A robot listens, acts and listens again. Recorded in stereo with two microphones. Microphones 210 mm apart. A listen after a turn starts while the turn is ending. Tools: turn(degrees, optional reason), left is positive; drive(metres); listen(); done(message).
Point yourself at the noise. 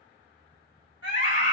turn(degrees=90)
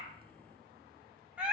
done("Found it: a scream, straight ahead, 2 to 4 m away.")